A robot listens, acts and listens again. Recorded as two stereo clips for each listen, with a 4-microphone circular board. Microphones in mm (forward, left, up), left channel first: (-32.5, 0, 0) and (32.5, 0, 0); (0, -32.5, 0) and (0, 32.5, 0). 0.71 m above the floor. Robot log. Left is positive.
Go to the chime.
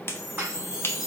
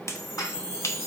note: The chime: 155° left.
cmd yaw +155
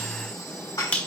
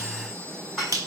cmd idle
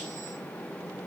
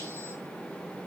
cmd idle
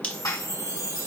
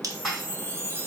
note: The chime is now 35° left.
cmd yaw +35
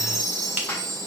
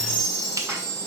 note: The chime is now 15° right.
cmd yaw -15
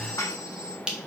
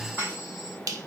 cmd idle
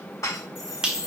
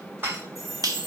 cmd fwd 1.0
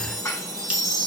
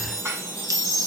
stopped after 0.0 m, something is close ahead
end: Something is in my way. I am facing the chime but have not reached it.